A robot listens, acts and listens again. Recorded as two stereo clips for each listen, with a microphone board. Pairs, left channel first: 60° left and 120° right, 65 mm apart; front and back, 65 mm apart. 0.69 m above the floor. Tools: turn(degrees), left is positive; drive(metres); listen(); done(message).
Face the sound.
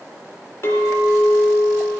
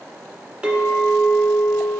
turn(degrees=105)
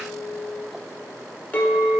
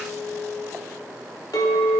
done("Facing the clink.")